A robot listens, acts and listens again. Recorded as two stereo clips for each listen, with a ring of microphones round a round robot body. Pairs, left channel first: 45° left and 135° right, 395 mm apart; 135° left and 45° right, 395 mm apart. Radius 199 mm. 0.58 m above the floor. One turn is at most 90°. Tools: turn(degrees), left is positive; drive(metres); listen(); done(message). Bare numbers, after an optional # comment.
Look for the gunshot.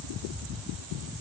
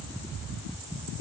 listen()
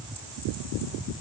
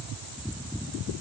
listen()
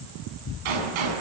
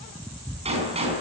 # The gunshot: 120° right.
turn(-90)
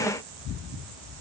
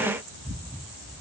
# Nothing new. It was at 30° right.
turn(-30)
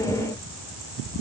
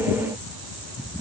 done("Facing where the gunshot came from. I can't hear it now.")